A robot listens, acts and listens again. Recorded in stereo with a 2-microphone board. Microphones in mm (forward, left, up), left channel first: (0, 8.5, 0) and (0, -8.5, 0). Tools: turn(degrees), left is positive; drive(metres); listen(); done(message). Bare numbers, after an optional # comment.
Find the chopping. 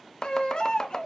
# The chopping: about 35° left or 145° left.
turn(35)
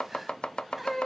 # So it is at 105° left.
turn(105)
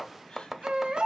# The chopping is now 10° right.
turn(-10)
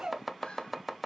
done("Found it: chopping, straight ahead, under 1 m away.")